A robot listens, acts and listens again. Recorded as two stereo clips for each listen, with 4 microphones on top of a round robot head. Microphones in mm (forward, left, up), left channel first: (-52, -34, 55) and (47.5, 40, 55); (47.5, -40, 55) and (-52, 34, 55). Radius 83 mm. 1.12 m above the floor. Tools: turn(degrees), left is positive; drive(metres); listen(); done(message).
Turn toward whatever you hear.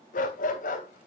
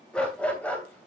turn(degrees=-115)
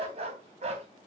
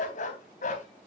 done("Found it: a dog barking, straight ahead, 2 to 4 m away.")